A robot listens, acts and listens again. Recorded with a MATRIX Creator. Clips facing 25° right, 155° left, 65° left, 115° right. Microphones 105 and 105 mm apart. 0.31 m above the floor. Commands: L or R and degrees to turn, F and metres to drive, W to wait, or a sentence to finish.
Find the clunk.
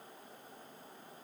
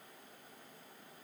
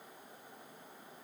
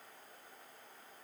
W
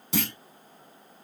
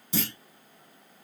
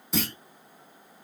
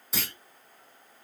R25
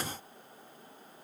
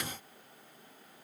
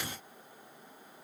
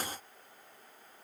Facing where the clunk came from. I can't hear it now.